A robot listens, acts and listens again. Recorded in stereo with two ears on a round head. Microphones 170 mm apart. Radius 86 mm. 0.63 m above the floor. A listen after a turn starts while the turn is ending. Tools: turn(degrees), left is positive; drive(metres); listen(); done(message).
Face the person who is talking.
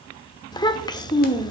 turn(degrees=20)
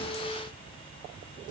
listen()
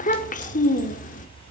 turn(degrees=135)
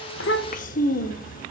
turn(degrees=45)
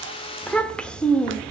done("Found it: a child speaking, straight ahead.")